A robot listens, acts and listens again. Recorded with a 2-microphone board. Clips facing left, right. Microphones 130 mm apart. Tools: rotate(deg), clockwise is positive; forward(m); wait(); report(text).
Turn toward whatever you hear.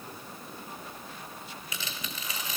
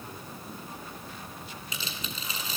rotate(30)
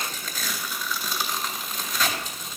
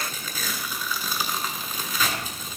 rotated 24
report("Found it: tearing paper, straight ahead, 1 to 2 m away.")